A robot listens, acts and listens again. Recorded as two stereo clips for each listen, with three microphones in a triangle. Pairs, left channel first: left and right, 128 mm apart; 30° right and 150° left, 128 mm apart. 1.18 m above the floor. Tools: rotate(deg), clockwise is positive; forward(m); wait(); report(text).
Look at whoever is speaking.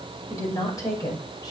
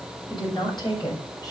rotate(-30)
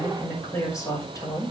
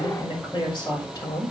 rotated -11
rotate(-30)
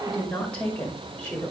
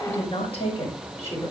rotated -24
rotate(-15)
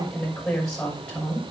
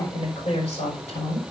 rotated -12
rotate(-10)
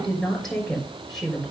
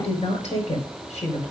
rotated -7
report("Found it: a woman speaking, straight ahead.")